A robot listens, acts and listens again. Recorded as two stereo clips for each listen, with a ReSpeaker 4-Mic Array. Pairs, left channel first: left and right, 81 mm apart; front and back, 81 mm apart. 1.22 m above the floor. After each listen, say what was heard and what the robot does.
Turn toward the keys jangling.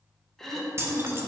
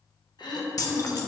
The keys jangling: 35° right. Turn 35° right.
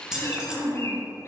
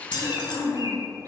The keys jangling is now 10° right. Turn 10° right.
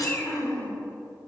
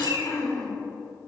Keep listening.
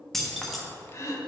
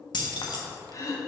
Facing the keys jangling, 1 to 2 m away.